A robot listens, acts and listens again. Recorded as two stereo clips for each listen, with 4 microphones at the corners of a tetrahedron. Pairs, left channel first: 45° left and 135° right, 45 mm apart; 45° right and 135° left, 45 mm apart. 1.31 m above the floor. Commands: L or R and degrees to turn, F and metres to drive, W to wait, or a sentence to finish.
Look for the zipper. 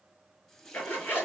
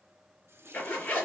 Found it: a zipper, straight ahead, 2 to 4 m away.